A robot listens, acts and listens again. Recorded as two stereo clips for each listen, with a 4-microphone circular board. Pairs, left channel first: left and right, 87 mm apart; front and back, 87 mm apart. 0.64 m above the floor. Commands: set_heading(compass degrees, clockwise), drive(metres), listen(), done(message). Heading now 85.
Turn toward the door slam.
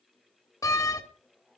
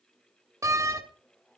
set_heading(310)
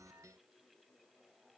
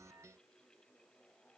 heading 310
done("Facing where the door slam came from. I can't hear it now.")